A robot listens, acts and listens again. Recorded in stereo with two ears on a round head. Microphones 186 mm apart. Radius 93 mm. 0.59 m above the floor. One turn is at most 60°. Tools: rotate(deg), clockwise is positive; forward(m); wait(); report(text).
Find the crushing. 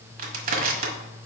rotate(45)
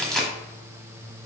report("Found it: crushing, straight ahead.")